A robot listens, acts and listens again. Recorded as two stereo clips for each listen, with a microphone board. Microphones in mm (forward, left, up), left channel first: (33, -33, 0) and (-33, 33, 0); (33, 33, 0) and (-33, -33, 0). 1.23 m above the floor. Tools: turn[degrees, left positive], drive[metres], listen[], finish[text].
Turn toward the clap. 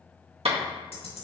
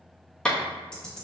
Thought: The clap: 125° left.
Action: turn[125]
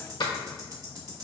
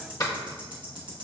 Action: finish[Found it: a clap, straight ahead.]